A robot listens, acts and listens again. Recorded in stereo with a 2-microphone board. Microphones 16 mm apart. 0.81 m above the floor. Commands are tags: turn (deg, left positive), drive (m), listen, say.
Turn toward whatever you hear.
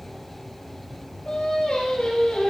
<turn deg="60"/>
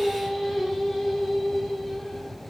<say>Found it: singing, straight ahead.</say>